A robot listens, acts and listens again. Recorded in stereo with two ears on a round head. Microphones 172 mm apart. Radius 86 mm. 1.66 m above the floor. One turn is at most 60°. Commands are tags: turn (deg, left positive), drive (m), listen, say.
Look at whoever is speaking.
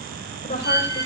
<turn deg="40"/>
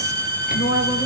<turn deg="60"/>
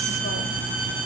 <turn deg="50"/>
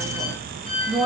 <say>Found it: a woman speaking, straight ahead, over 4 m away.</say>